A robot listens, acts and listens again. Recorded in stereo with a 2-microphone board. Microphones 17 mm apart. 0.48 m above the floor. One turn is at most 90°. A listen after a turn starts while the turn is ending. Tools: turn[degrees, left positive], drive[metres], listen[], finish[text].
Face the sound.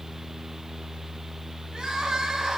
Thought: The crying: about 45° right or 135° right.
Action: turn[-45]
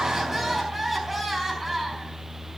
Action: finish[Found it: crying, straight ahead, over 4 m away.]